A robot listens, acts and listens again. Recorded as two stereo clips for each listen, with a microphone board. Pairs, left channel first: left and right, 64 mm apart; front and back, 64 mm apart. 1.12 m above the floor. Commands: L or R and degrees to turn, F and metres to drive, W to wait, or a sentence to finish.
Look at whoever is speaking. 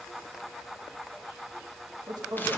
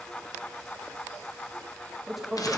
R90
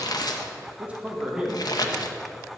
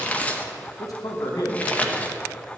R10
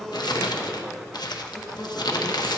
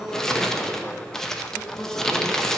L40
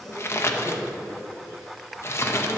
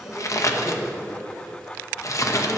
Facing the man speaking, 2 to 4 m away.